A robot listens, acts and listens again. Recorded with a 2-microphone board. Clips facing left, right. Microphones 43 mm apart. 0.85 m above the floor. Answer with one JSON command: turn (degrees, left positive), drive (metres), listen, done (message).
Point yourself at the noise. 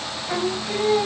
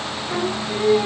{"turn": 30}
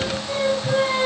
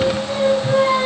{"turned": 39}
{"done": "Facing the singing."}